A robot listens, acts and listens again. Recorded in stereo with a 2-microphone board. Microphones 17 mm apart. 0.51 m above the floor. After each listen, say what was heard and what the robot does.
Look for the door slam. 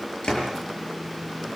The door slam: about 55° left or 125° left. Turn 55° left.
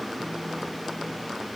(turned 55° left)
Keep listening.
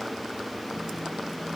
I heard a door slam, but can't make it out now. It was about straight ahead or 70° left.